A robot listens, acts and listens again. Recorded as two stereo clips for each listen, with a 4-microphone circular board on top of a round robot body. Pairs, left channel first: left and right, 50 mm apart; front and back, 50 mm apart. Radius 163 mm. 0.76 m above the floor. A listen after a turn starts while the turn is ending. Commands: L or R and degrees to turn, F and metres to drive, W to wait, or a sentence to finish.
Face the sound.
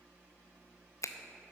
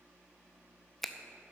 L85
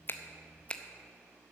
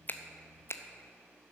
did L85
L20
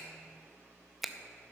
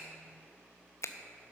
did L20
Found it: a finger snap, straight ahead, under 1 m away.